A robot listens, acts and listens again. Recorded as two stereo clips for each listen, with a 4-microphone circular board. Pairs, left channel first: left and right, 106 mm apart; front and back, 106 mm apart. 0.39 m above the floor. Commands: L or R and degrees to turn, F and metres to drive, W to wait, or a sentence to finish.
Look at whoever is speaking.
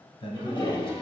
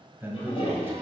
L115
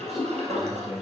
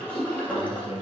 Facing the man speaking, 1 to 2 m away.